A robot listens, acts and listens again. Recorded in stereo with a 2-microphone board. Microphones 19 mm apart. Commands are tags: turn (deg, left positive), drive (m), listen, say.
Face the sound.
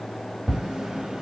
<turn deg="-65"/>
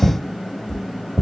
<say>Found it: tapping, straight ahead, under 1 m away.</say>